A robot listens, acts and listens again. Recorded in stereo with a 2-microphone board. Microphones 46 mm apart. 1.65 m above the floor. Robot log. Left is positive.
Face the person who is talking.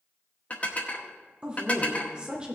note: The woman speaking: about 20° right or 160° right.
cmd yaw -20
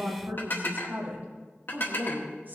note: So it is at 140° right.
cmd yaw -140
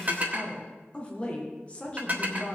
note: The woman speaking is now 25° left.
cmd yaw +25
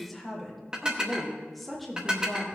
end: Found it: a woman speaking, straight ahead.